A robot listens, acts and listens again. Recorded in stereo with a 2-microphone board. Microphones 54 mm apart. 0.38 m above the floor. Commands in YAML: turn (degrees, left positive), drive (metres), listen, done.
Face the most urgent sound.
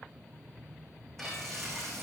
listen: true
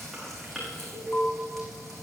turn: 70
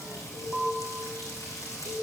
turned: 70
turn: 10
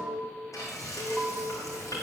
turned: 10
done: "Found it: an alarm, straight ahead."